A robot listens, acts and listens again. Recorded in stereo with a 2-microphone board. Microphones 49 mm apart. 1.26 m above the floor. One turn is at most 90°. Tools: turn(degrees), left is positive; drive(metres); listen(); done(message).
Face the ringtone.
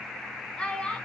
listen()
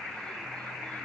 listen()
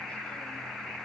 done("I can't make out a ringtone, only a child speaking.")